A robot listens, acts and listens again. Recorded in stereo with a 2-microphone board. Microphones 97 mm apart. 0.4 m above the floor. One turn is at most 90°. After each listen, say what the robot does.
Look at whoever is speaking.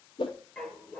Keep listening.
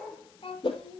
Turn 90° left.
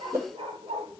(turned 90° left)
Keep listening.
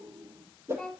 Facing the child speaking.